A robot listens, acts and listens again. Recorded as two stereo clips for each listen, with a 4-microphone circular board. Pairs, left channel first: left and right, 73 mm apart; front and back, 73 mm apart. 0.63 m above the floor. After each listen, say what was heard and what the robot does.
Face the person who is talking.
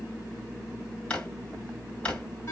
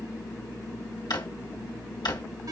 Keep listening.
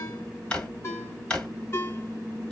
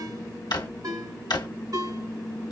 Keep listening.
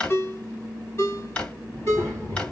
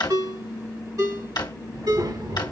The child speaking: 165° left. Turn 165° left.
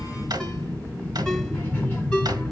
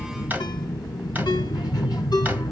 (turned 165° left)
The child speaking is now 30° left. Turn 30° left.
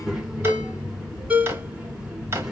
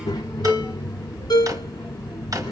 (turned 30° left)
Facing the child speaking.